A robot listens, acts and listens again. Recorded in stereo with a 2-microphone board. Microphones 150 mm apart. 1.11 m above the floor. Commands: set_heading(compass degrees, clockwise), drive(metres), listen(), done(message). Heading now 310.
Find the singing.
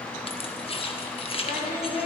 set_heading(220)
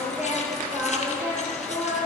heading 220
set_heading(240)
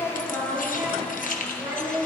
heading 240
set_heading(255)
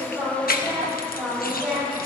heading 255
done("Facing the singing, over 4 m away.")